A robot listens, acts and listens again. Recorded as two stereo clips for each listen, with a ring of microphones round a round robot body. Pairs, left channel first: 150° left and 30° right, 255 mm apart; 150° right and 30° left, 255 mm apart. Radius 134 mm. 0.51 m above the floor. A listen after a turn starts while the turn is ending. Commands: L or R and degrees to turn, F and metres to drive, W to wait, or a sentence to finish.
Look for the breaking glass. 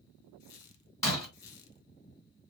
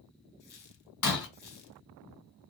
R130
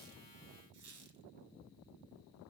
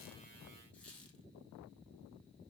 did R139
L10
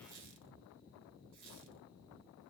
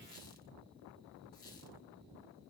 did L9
I heard breaking glass from this way, but can't make it out now.